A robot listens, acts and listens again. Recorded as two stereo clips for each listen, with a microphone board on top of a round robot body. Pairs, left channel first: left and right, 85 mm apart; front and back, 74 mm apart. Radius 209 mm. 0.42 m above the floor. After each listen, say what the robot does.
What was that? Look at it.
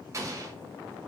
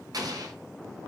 Turn 145° right.
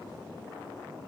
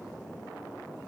I heard an explosion from this way, but can't make it out now.